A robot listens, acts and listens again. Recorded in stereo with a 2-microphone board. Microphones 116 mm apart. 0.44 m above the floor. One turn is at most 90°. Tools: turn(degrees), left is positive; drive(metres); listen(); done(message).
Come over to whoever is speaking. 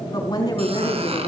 turn(degrees=35)
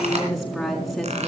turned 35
drive(metres=1.0)
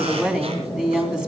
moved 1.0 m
drive(metres=1.0)
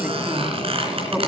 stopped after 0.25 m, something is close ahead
turn(degrees=-10)
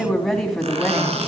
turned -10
done("Blocked. The woman speaking is further on, straight ahead.")